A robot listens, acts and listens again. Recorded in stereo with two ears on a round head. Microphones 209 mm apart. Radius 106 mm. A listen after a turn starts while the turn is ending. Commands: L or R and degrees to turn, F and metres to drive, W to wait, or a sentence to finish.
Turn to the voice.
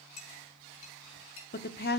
L45
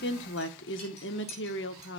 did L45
L80
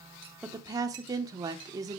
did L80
R20
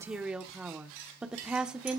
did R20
Found it: a woman speaking, straight ahead, 1 to 2 m away.